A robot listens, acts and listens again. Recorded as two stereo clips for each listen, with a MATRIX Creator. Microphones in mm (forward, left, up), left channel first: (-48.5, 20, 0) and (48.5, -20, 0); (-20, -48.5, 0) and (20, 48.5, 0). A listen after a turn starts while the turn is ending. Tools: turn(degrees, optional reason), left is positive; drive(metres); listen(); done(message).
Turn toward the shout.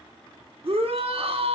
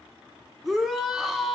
turn(degrees=-20, reason="The shout: 20° right.")
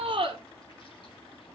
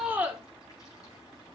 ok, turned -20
done("Found it: a shout, straight ahead, 1 to 2 m away.")